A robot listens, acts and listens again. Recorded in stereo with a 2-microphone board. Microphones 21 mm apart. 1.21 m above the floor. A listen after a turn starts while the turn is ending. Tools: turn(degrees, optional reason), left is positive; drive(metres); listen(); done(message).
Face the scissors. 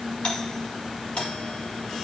listen()
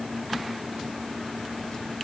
listen()
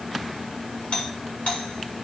done("I can't make out scissors to turn to.")